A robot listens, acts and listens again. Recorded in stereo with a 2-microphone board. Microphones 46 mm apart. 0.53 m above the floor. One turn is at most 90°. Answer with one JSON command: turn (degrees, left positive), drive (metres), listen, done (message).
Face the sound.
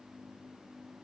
{"listen": true}
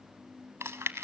{"turn": -90}
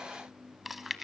{"done": "Found it: chewing, straight ahead."}